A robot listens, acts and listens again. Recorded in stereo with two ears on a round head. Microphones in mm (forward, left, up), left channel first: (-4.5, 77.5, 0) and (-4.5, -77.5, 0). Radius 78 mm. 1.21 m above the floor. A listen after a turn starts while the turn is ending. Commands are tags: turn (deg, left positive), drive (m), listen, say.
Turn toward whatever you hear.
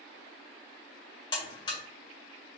<turn deg="25"/>
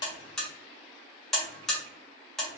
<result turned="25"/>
<say>Found it: a buzzer, straight ahead.</say>